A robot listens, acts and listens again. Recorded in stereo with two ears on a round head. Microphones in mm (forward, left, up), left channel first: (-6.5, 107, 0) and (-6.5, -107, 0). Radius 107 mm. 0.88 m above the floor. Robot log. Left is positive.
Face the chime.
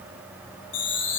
note: The chime: about 55° left or 125° left.
cmd yaw +55
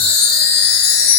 note: So it is at 70° left.
cmd yaw +70
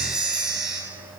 end: Found it: a chime, straight ahead, 1 to 2 m away.